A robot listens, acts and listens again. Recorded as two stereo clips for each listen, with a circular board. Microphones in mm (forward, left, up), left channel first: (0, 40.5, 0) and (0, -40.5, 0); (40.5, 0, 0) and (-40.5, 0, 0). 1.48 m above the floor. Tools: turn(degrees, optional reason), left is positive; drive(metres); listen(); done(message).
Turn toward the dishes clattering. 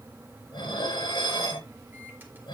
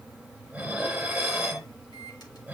turn(degrees=105, reason="The dishes clattering: 105° left.")
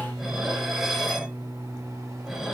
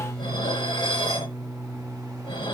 turn(degrees=-10, reason="The dishes clattering is now 10° right.")
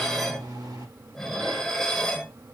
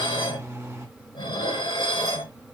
done("Found it: dishes clattering, straight ahead, over 4 m away.")